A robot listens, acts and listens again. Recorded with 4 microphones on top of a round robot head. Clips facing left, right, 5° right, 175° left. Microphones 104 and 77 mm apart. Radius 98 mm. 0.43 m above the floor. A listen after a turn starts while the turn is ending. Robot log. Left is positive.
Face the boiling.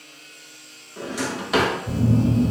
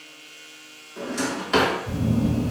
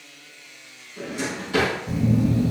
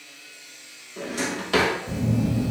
cmd idle
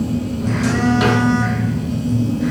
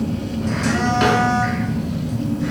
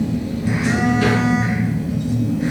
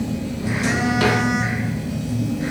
cmd idle
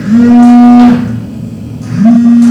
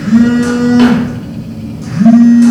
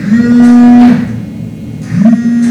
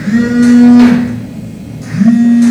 end: I can't make out boiling to turn to.